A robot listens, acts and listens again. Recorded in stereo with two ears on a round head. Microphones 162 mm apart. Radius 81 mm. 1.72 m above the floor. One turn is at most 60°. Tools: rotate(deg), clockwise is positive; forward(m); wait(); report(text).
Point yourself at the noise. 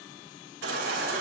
rotate(60)
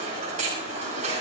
rotate(45)
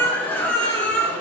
rotate(-10)
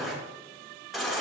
report("Found it: a baby crying, straight ahead.")